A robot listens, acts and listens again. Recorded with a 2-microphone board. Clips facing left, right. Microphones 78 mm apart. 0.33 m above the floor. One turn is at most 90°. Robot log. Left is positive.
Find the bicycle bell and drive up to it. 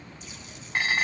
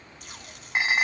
cmd idle
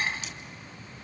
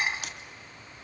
cmd idle
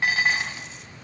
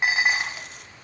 end: I can't make out a bicycle bell, only dishes clattering and tape being pulled.